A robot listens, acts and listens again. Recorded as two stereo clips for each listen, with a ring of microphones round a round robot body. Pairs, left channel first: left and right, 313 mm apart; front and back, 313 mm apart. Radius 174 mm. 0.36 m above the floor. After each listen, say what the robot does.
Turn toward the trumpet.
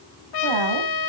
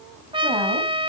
Turn 105° left.
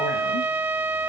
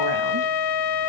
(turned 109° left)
Facing the trumpet.